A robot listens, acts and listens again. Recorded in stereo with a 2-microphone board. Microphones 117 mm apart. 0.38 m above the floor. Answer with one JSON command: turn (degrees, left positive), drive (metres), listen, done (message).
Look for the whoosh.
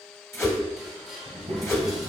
{"turn": 25}
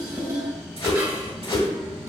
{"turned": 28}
{"turn": 125}
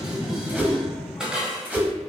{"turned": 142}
{"turn": -15}
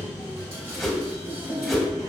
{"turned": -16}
{"done": "Facing the whoosh, under 1 m away."}